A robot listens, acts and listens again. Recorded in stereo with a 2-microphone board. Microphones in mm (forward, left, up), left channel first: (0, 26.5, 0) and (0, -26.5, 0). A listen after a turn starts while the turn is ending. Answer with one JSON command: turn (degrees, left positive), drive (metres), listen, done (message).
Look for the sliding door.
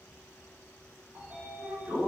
{"turn": -40}
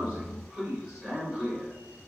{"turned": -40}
{"done": "Facing the sliding door, under 1 m away."}